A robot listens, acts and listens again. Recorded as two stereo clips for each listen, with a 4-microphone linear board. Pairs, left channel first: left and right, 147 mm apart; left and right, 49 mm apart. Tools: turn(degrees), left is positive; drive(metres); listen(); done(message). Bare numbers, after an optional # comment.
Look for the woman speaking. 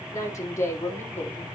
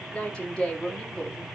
turn(30)
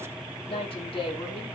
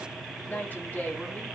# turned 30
# So it is at 145° left.
turn(145)
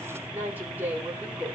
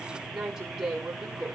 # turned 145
# The woman speaking is now 10° right.
turn(-10)
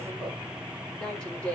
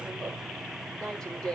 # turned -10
# The woman speaking is now 10° left.
turn(10)
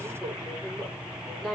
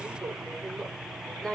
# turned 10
done("Facing the woman speaking, over 4 m away.")